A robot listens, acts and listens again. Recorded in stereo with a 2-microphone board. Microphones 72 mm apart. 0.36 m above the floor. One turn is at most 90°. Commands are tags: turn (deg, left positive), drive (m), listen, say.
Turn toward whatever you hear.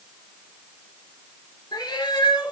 <turn deg="90"/>
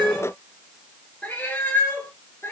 <turn deg="30"/>
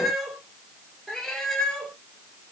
<turn deg="10"/>
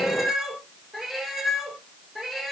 <say>Found it: a cat meowing, straight ahead.</say>